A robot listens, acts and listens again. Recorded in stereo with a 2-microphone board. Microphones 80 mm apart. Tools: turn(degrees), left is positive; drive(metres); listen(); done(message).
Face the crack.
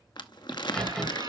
turn(degrees=30)
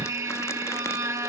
listen()
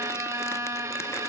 done("I heard a crack, but can't make it out now. It was about 20° right or 140° left.")